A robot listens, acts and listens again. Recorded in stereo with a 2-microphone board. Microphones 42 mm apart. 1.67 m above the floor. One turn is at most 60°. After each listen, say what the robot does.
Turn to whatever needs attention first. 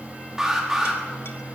Turn 30° right.
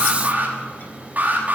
Turn 60° right.
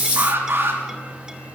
Turn 60° right.
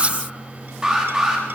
Turn 15° right.
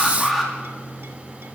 Facing the alarm.